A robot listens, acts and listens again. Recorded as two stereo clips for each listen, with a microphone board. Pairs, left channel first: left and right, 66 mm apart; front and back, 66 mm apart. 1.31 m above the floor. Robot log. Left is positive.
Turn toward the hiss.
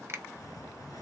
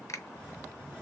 note: The hiss: 110° left.
cmd yaw +110
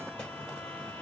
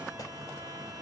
note: The hiss is now 15° left.
cmd yaw +15
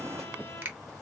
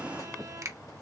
end: Found it: a hiss, straight ahead, 2 to 4 m away.